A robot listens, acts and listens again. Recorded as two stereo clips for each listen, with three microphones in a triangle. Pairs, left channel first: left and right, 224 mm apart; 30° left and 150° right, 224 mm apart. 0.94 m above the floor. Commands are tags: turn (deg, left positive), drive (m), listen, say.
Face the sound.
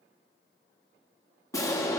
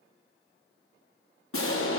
<turn deg="15"/>
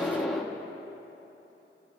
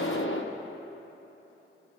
<say>Found it: an explosion, straight ahead, 1 to 2 m away.</say>